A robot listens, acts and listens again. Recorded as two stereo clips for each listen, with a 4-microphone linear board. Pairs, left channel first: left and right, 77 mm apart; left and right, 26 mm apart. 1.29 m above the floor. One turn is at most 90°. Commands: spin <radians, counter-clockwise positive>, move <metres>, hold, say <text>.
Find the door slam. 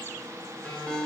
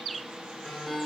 hold
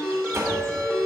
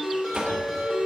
spin -0.70
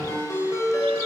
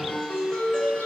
hold
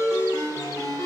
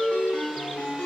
say I heard a door slam, but can't make it out now. It was about straight ahead or 100° right.